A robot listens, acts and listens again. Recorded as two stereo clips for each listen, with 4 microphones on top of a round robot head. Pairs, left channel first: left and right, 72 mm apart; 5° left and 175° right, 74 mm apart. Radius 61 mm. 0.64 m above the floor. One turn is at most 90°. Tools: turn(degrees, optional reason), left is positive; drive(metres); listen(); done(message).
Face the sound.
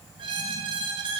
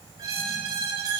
turn(degrees=-90, reason="The squeak: 120° right.")
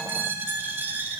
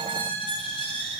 turn(degrees=-25, reason="The squeak is now 25° right.")
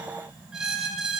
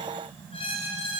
turn(degrees=-10, reason="The squeak is now 10° right.")
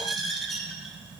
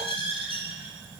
done("Facing the squeak.")